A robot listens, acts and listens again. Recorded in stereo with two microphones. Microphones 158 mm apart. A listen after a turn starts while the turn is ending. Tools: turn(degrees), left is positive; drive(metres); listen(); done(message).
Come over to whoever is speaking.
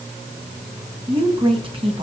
turn(degrees=-35)
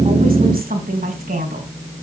turn(degrees=-105)
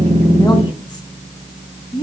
turn(degrees=30)
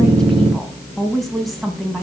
drive(metres=1.0)
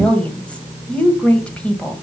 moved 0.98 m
turn(degrees=10)
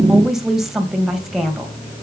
drive(metres=1.0)
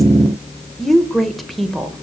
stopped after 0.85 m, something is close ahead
done("I am next to the woman speaking.")